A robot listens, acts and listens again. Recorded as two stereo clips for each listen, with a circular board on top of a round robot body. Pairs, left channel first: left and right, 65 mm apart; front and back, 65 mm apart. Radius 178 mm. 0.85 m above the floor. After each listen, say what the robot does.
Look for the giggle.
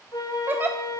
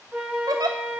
Turn 155° right.
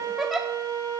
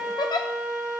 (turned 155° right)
Found it: a giggle, straight ahead.